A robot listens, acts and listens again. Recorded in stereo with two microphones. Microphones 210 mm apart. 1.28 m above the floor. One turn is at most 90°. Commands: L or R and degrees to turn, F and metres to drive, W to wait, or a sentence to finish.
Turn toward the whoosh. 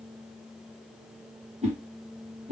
R30
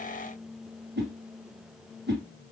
R90
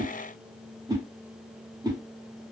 R20
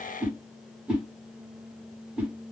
Facing the whoosh.